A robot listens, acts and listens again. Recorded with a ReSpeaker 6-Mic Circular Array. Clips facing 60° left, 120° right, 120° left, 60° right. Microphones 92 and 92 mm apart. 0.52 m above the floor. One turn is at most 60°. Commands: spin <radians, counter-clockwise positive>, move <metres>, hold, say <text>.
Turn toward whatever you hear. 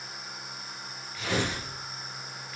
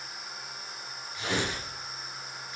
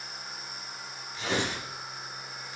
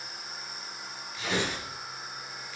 spin 1.05
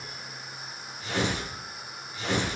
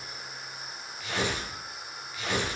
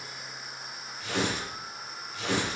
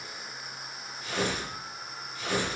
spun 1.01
spin 1.05
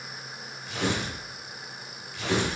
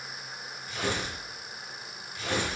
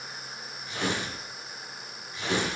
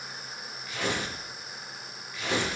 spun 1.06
spin 0.96
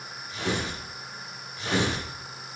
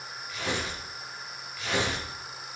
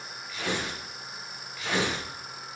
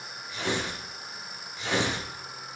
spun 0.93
say Found it: tearing paper, straight ahead, over 4 m away.